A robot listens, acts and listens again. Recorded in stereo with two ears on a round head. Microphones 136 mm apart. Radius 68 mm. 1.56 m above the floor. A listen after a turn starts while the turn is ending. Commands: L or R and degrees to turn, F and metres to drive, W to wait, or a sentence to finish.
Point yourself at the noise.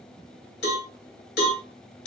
L90
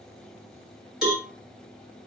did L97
Found it: a cowbell, straight ahead.